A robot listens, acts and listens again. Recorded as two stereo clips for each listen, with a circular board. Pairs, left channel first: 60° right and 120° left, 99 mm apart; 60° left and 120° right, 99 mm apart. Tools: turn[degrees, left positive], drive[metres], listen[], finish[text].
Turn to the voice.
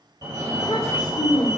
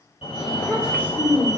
Thought: The child speaking: 15° right.
Action: turn[-15]
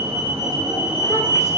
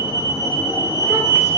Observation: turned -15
Action: listen[]
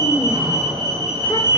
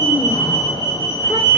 Action: listen[]
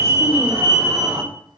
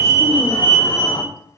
Action: finish[Facing where the child speaking came from. I can't hear it now.]